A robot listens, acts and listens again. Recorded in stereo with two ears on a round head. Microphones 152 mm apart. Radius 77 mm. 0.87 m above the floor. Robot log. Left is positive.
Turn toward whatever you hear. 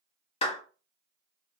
note: The clap: about 35° left or 145° left.
cmd yaw +35
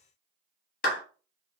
note: So it is at 100° left.
cmd yaw +100
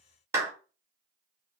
note: The clap is now 20° right.
cmd yaw -20
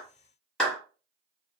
end: Found it: a clap, straight ahead, 1 to 2 m away.